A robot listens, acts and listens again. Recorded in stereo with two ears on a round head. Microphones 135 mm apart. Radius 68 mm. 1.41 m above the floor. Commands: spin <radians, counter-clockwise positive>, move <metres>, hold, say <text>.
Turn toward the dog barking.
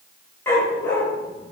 spin 0.26
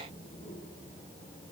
hold
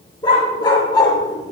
spin 0.52
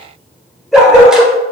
say Facing the dog barking, 1 to 2 m away.